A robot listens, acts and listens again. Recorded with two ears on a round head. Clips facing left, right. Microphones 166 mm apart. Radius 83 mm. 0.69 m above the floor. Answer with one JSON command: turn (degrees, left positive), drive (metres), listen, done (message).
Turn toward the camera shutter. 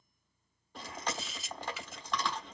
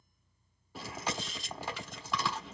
{"turn": 30}
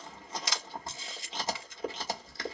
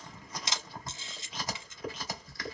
{"turn": -25}
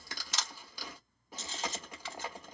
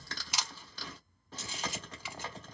{"turn": -10}
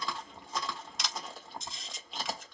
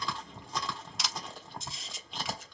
{"done": "Found it: a camera shutter, straight ahead, 1 to 2 m away."}